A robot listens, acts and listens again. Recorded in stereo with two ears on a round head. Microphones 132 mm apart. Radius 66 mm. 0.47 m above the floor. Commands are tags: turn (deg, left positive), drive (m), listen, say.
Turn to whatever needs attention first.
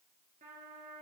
<listen/>
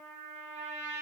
<listen/>
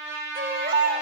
<turn deg="-60"/>
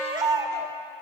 <turn deg="-30"/>
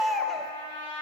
<say>Found it: a baby crying, straight ahead, under 1 m away.</say>